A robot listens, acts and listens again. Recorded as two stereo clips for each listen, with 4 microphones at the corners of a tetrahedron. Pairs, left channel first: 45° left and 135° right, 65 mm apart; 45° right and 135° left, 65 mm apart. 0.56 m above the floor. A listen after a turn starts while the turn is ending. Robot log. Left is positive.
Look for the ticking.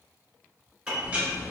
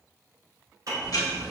note: The ticking: 65° right.
cmd yaw -65
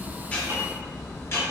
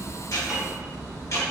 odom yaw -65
end: Found it: ticking, straight ahead, under 1 m away.